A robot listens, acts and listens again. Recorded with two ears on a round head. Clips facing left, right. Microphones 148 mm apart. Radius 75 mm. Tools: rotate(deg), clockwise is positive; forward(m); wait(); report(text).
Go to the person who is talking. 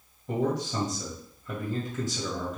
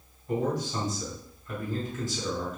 rotate(-55)
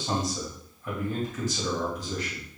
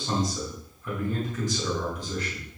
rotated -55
forward(1.0)
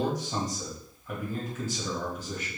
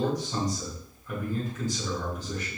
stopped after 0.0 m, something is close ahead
report("Blocked. The man speaking is further on, straight ahead.")